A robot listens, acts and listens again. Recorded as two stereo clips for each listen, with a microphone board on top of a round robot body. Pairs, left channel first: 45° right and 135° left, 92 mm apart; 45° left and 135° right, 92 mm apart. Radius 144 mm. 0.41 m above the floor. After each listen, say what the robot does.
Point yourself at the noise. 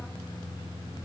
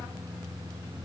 Keep listening.
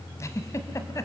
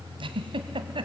Turn 105° right.
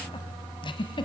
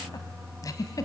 Turn 10° right.
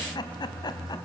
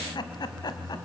Facing the giggle, 1 to 2 m away.